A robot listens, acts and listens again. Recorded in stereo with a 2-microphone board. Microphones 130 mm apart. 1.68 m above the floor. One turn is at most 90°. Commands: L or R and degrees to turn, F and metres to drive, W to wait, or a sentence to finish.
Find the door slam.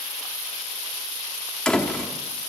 L30
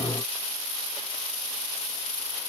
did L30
W
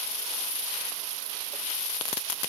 I heard a door slam, but can't make it out now. It was about 25° right or 145° left.